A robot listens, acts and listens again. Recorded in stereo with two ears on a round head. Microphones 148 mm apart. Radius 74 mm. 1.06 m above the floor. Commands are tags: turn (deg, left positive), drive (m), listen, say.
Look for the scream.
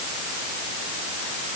<listen/>
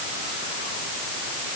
<listen/>
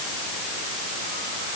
<say>I can't make out a scream.</say>